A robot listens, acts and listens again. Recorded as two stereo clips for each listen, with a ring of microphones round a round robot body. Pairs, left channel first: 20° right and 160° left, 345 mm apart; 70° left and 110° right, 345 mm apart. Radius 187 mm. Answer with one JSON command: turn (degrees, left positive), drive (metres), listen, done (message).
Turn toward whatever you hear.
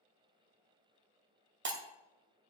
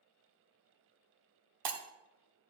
{"turn": -145}
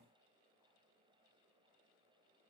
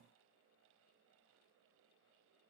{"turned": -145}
{"done": "I heard breaking glass from this way, but can't make it out now."}